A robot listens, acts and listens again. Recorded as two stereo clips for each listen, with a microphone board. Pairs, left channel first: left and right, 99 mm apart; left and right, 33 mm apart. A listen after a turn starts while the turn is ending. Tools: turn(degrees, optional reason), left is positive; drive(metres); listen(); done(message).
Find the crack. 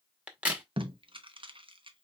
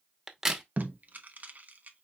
turn(degrees=-30)
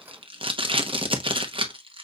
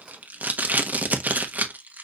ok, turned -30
listen()
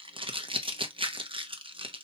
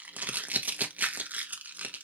done("I heard a crack, but can't make it out now. It was about 15° left or 135° right.")